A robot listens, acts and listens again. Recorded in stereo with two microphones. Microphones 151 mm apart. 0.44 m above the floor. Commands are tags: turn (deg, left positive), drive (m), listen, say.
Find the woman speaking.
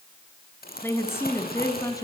<turn deg="25"/>
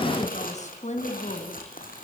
<turn deg="125"/>
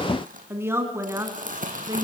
<turn deg="-20"/>
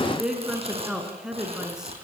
<say>Facing the woman speaking, over 4 m away.</say>